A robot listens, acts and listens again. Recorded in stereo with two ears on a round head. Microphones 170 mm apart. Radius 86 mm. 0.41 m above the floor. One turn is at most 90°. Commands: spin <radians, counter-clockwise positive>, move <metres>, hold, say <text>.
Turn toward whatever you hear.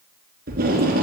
spin -0.87
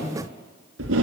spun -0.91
spin -1.31
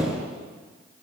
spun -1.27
say Facing the tape being pulled.